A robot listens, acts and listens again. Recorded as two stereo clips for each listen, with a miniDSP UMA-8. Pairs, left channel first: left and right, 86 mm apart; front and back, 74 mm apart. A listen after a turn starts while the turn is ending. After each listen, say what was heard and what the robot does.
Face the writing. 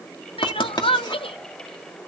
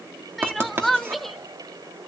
The writing: 120° left. Turn 120° left.
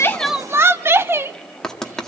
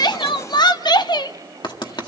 Found it: writing, straight ahead, 1 to 2 m away.